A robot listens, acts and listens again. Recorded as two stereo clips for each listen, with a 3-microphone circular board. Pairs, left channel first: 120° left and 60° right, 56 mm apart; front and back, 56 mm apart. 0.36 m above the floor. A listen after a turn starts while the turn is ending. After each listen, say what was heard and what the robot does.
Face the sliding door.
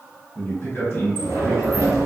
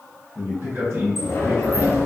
The sliding door: 40° right. Turn 40° right.
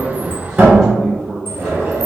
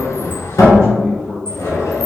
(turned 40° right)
Found it: a sliding door, straight ahead.